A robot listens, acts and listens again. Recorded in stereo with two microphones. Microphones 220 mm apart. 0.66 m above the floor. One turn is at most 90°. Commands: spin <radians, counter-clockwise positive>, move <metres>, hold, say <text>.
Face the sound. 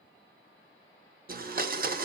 spin -0.70
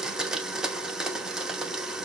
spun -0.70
say Found it: a blender, straight ahead, under 1 m away.